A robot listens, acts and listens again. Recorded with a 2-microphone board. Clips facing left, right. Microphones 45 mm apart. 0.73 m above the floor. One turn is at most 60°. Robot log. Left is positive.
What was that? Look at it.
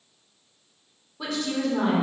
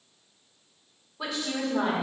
cmd yaw -30
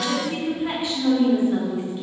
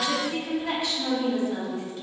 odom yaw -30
note: So it is at 20° left.
cmd yaw +20
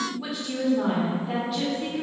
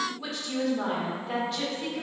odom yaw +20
end: Found it: a woman speaking, straight ahead.